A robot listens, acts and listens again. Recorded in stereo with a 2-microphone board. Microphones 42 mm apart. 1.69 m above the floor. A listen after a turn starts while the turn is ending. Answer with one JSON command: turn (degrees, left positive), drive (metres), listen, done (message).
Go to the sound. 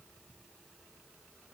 {"listen": true}
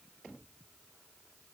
{"listen": true}
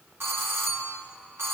{"turn": -90}
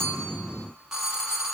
{"turn": -15}
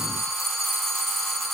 {"drive": 1.0}
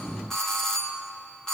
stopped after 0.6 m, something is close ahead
{"turn": 15}
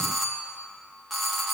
{"done": "Blocked. The doorbell is further on, straight ahead."}